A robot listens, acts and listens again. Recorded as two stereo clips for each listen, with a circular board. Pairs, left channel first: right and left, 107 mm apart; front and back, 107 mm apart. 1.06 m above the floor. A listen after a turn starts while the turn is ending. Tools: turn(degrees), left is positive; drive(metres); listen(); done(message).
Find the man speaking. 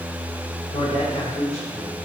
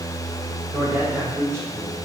turn(degrees=-115)
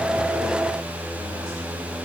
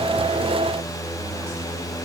listen()
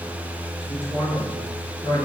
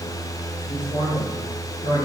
turn(degrees=-25)
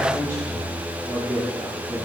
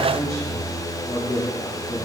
turn(degrees=-15)
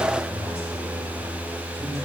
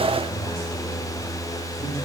listen()
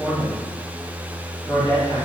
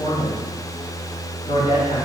done("Facing the man speaking, over 4 m away.")